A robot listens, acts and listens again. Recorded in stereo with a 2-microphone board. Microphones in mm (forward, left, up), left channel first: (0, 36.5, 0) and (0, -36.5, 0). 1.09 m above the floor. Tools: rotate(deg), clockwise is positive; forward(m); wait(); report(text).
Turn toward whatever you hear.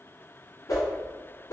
rotate(-60)
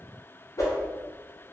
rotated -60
rotate(-55)
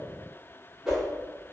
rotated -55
rotate(10)
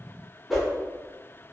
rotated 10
report("Found it: a whoosh, straight ahead, under 1 m away.")